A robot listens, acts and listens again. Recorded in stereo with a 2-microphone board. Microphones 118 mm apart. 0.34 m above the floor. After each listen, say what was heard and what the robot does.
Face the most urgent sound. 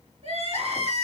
The crying: about 60° right or 120° right. Turn 60° right.
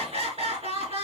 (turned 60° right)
So it is at 60° right. Turn 60° right.
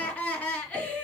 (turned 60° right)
The crying is now 10° left. Turn 10° left.
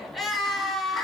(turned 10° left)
Facing the crying.